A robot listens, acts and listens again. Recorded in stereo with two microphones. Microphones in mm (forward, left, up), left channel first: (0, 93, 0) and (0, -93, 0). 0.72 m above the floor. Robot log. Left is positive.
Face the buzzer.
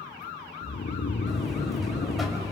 cmd yaw +30
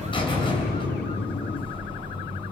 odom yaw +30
note: So it is at 150° left.
cmd yaw +150
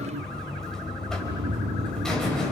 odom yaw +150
end: Facing the buzzer.